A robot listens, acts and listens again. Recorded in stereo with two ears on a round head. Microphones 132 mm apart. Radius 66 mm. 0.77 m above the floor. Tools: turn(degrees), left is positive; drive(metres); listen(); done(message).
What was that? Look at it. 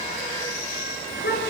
turn(degrees=70)
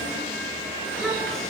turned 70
done("Found it: a child speaking, straight ahead.")